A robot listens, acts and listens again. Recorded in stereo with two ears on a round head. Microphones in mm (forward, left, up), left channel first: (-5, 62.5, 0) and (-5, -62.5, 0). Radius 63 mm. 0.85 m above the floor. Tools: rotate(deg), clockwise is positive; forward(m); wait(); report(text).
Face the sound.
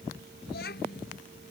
rotate(-90)
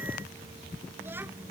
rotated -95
wait()
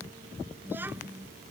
rotate(15)
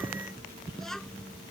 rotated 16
report("Facing the child speaking.")